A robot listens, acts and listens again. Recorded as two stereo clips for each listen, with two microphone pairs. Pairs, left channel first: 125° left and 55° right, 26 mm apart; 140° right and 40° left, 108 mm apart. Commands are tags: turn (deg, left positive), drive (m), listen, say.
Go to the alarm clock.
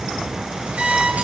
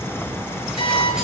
<turn deg="-105"/>
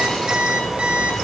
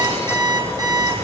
<turn deg="-15"/>
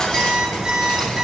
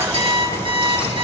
<drive m="1.0"/>
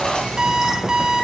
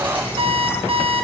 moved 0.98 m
<drive m="1.0"/>
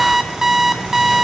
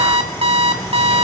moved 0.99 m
<turn deg="15"/>
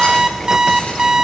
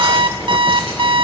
<drive m="1.0"/>
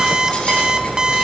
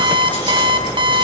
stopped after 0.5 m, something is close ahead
<say>Arrived at the alarm clock, straight ahead.</say>